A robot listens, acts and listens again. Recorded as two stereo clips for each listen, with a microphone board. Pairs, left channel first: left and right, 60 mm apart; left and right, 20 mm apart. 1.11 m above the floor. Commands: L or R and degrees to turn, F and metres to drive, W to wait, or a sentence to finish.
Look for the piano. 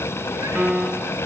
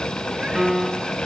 R20
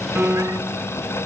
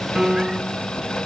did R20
R140
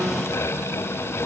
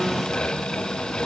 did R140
W
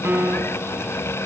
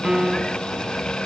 R40
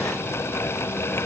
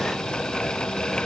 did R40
W
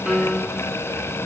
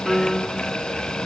Found it: a piano, straight ahead.